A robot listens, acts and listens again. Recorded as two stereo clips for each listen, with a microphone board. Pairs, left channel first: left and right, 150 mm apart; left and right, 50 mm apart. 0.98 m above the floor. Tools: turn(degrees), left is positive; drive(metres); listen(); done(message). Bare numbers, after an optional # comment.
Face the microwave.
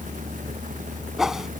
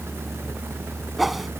listen()
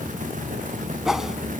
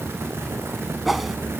listen()
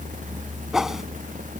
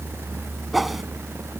done("I can't make out a microwave to turn to.")